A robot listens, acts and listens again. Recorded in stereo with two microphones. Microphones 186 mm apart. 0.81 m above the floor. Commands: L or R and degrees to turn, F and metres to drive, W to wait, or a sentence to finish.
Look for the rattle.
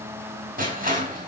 W
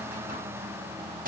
W
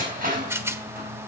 R30
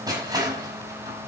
W
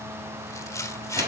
L15
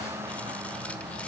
W
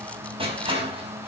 W
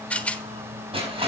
L10
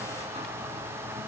W
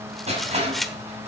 Facing the rattle, 1 to 2 m away.